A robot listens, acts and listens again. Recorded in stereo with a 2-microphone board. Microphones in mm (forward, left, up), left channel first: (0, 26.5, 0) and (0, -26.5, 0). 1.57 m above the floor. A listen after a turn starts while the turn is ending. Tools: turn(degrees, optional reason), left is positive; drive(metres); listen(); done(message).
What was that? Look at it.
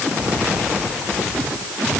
listen()
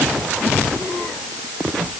listen()
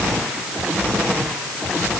done("I can't make out anything to turn to.")